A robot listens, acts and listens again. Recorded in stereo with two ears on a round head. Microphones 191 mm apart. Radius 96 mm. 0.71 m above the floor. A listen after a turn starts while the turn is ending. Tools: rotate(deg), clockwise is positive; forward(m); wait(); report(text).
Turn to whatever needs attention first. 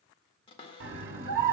rotate(50)
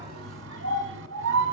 rotate(75)
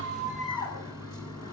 rotate(-20)
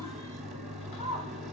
report("Found it: a scream, straight ahead, 1 to 2 m away.")